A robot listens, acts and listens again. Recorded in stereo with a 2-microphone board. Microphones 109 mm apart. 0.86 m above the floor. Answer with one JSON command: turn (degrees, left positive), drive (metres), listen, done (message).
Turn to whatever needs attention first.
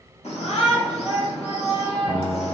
{"turn": 70}
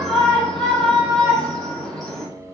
{"done": "Found it: a shout, straight ahead, 1 to 2 m away."}